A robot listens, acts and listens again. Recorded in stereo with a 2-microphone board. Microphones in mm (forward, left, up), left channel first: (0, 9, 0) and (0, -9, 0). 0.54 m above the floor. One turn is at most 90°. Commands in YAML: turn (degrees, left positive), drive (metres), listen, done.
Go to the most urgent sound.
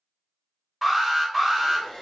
turn: 30
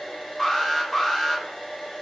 turn: 90
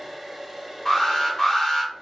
turn: 25
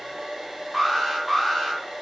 drive: 1.0
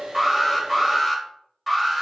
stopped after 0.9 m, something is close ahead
done: "Arrived at the alarm, straight ahead."